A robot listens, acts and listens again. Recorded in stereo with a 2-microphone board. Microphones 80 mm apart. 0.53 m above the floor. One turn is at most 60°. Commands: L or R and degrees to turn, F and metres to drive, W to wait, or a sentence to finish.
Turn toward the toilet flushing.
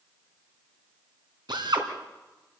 W
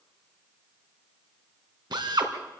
W
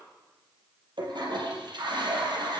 R60
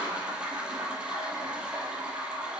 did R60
R15
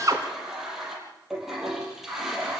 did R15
Facing the toilet flushing.